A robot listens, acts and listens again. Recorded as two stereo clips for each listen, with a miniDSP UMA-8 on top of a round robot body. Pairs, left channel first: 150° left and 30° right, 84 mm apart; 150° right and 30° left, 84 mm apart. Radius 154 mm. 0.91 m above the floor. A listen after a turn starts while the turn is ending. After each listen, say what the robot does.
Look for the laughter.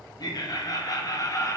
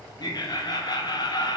Turn 165° right.
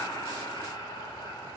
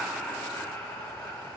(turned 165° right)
Turn 155° left.
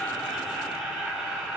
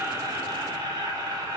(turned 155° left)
Turn 55° left.
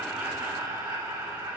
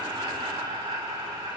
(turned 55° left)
Turn 20° left.
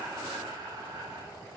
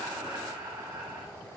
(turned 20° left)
Facing the laughter, 2 to 4 m away.